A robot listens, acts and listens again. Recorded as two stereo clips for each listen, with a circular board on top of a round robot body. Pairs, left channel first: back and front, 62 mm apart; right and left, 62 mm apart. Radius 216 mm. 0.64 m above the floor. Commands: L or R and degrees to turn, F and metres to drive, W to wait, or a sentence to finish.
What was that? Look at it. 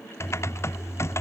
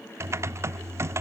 L135
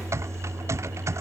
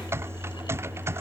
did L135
L40
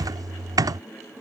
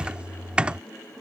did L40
L15
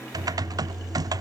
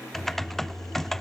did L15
Facing the typing on a keyboard.